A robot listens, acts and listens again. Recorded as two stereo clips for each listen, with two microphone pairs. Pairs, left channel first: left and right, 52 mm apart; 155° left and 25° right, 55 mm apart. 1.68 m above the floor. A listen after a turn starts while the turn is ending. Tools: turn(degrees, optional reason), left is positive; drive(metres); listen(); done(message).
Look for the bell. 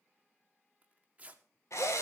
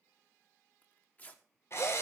listen()
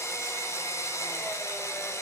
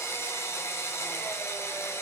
listen()
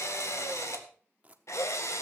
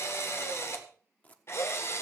done("I can't make out a bell, only a drill and tearing paper.")